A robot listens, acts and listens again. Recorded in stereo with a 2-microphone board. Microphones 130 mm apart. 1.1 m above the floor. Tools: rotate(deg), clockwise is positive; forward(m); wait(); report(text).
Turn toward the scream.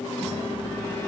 wait()
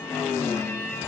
wait()
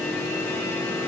report("I can't make out a scream to turn to.")